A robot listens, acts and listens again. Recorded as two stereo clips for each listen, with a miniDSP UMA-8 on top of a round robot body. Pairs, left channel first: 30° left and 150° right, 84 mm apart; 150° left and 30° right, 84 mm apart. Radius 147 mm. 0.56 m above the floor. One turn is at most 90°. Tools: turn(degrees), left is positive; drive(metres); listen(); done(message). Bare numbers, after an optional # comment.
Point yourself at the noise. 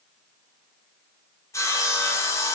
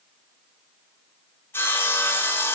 # The sawing: 85° left.
turn(85)
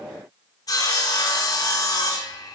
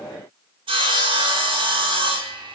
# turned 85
# The sawing is now 15° right.
turn(-15)
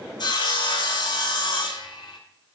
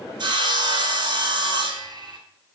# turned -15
done("Facing the sawing, 1 to 2 m away.")